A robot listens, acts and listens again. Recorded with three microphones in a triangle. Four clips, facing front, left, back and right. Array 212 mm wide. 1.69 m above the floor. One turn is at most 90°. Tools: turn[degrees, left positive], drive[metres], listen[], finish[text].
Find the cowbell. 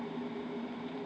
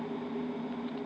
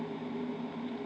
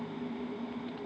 Action: listen[]
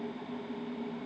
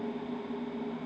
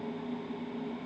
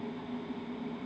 Action: listen[]
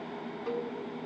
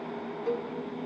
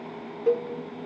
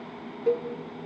Thought: The cowbell: 145° right.
Action: turn[-90]
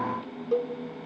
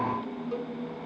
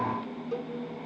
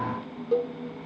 Thought: The cowbell is now 60° right.
Action: turn[-60]
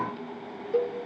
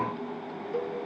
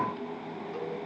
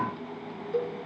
Thought: The cowbell is now 10° right.
Action: turn[-10]
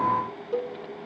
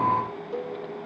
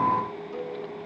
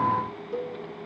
Action: finish[Facing the cowbell.]